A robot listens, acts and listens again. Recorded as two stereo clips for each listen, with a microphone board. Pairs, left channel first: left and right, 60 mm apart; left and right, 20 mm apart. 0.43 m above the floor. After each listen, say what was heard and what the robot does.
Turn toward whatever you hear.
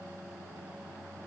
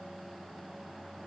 Keep listening.
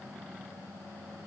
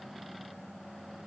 Keep listening.
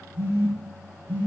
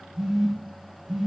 The phone buzzing: about 45° right or 135° right. Turn 45° right.
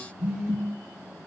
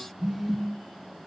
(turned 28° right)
So it is at 15° right. Turn 15° right.
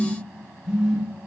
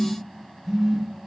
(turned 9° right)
The phone buzzing is now 10° right. Turn 10° right.
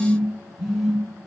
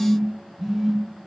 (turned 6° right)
Found it: a phone buzzing, straight ahead.